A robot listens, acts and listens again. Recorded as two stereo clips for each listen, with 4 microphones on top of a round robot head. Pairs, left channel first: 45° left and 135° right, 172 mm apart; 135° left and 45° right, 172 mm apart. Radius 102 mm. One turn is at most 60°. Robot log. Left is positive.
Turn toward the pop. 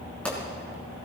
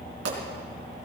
note: The pop: 40° right.
cmd yaw -40
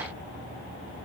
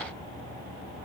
end: I heard a pop from this way, but can't make it out now.